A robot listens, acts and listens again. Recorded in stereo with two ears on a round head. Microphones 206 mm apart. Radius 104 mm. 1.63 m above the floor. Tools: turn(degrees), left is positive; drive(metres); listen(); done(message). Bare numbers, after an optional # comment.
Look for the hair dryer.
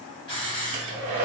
turn(-90)
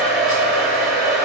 done("Found it: a hair dryer, straight ahead, under 1 m away.")